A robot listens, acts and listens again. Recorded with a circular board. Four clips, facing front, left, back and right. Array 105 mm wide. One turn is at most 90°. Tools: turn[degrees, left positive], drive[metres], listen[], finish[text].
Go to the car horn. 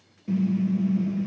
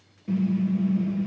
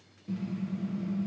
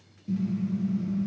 Thought: The car horn: 45° left.
Action: turn[45]
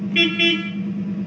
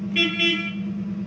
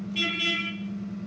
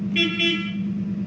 Action: drive[1.0]
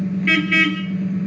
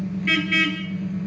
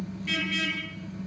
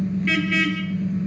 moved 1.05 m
Action: drive[1.0]
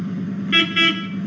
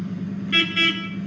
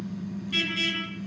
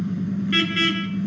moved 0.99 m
Action: drive[1.0]
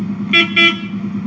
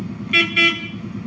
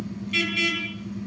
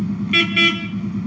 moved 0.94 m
Action: drive[1.0]
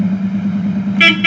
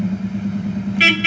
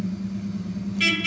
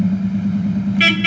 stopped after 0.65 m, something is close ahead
Action: finish[I am next to the car horn.]